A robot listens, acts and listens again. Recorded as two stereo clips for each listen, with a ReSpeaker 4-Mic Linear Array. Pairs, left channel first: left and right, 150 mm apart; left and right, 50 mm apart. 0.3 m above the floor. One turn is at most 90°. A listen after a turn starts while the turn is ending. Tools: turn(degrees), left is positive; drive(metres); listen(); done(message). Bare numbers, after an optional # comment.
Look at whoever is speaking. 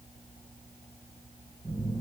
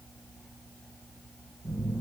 listen()
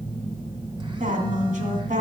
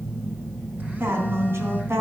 # The woman speaking: about 60° right or 120° right.
turn(-60)
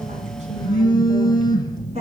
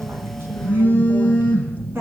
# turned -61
# So it is at 50° right.
turn(-50)
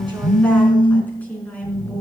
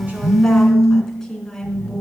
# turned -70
# The woman speaking is now 10° left.
turn(10)
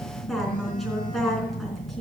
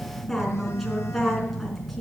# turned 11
done("Found it: a woman speaking, straight ahead.")